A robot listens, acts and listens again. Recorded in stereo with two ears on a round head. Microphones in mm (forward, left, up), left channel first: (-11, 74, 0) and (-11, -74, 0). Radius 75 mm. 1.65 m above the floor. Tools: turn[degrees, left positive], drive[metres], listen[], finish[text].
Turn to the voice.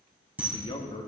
Thought: The man speaking: about 30° left or 150° left.
Action: turn[30]
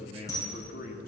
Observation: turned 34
Thought: So it is at 120° left.
Action: turn[120]
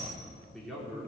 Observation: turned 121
Action: finish[Found it: a man speaking, straight ahead, 2 to 4 m away.]